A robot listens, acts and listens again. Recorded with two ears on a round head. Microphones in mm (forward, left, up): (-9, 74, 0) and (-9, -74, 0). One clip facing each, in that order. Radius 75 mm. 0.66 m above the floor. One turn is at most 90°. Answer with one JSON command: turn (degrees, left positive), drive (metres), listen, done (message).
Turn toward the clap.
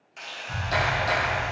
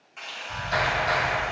{"turn": 60}
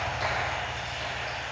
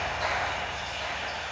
{"turn": 35}
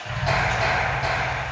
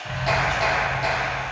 {"turn": -10}
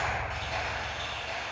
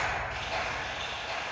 {"done": "Facing the clap, 1 to 2 m away."}